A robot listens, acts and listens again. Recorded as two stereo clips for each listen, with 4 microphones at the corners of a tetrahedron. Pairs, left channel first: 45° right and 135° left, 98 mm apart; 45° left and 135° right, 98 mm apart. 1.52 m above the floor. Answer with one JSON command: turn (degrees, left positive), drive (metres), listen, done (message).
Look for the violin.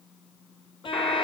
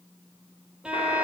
{"turn": -55}
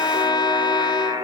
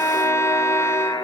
{"turn": -15}
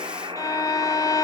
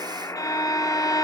{"done": "Facing the violin."}